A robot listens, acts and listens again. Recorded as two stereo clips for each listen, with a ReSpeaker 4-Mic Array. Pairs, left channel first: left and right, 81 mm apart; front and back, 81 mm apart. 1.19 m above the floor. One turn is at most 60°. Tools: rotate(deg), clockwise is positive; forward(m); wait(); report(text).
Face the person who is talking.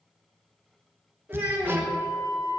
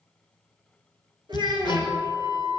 rotate(60)
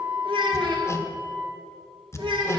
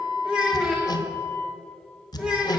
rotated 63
rotate(60)
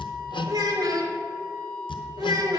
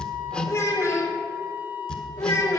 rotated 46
rotate(55)
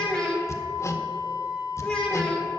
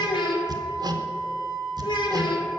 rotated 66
rotate(-10)
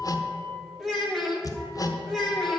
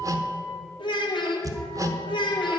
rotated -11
report("Facing the child speaking, 2 to 4 m away.")